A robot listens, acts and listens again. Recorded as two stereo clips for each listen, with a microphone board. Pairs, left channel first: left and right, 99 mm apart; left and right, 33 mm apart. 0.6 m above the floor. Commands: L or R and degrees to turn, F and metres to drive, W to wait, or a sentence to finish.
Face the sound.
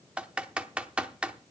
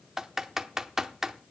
R30
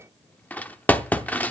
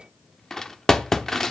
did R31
L20
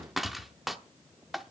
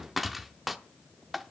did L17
Found it: typing on a keyboard, straight ahead.